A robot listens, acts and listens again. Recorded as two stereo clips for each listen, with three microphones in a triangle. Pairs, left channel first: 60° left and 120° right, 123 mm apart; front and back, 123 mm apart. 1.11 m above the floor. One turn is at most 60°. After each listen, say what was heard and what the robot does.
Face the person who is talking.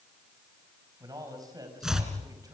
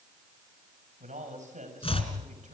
The man speaking: straight behind. Turn 60° left.
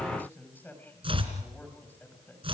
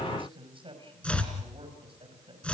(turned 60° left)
The man speaking is now 135° left. Turn 60° left.
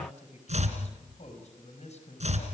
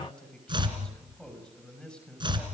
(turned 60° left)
The man speaking is now 85° left. Turn 60° left.
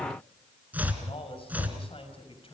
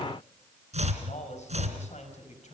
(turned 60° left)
The man speaking is now 20° left. Turn 20° left.
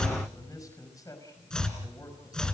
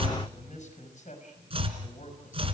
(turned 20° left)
Facing the man speaking.